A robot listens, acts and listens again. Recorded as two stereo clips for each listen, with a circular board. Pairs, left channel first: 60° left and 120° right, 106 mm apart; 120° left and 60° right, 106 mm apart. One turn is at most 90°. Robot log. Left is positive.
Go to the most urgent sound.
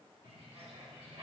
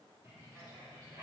cmd idle
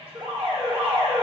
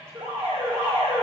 note: The alarm: 85° right.
cmd yaw -85
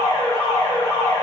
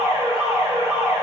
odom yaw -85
cmd fwd 1.0
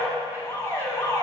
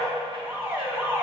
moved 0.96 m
cmd fwd 1.0
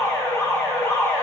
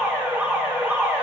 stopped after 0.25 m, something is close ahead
note: The alarm is now 10° left.
cmd yaw +10
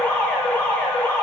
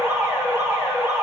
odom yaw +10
end: I am next to the alarm.